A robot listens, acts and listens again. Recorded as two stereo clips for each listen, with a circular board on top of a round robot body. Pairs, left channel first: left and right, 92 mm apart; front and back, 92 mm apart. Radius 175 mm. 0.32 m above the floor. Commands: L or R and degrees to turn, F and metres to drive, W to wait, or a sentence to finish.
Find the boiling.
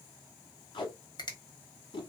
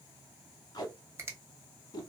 W
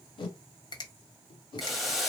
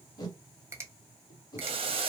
L180
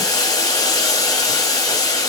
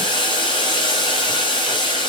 L40
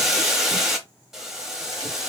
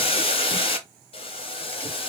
Found it: boiling, straight ahead, under 1 m away.